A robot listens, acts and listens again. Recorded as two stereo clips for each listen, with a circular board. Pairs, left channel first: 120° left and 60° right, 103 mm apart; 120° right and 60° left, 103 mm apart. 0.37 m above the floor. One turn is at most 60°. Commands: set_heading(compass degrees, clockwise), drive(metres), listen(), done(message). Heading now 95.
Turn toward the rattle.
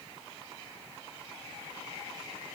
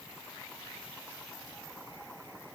listen()
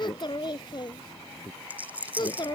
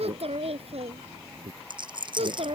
set_heading(80)
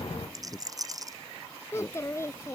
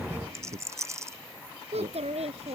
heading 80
done("Found it: a rattle, straight ahead.")